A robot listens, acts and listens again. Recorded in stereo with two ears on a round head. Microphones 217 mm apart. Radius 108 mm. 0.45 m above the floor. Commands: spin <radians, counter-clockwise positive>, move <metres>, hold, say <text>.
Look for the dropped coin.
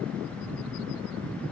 hold
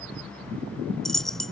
spin 0.52
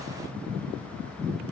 hold
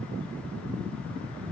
say I heard a dropped coin, but can't make it out now. It was about 30° right or 150° left.